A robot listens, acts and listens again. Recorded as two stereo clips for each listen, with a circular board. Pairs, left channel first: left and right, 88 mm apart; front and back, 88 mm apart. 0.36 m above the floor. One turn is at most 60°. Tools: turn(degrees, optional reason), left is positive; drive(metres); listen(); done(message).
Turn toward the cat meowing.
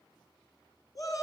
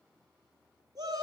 listen()
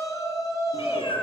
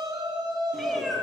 turn(degrees=60, reason="The cat meowing: 90° left.")
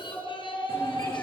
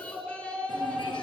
turn(degrees=30, reason="Nothing new. It was at 30° left.")
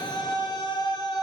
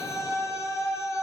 listen()
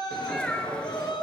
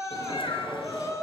turn(degrees=10, reason="The cat meowing is now 10° left.")
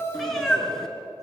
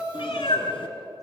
done("Found it: a cat meowing, straight ahead, 2 to 4 m away.")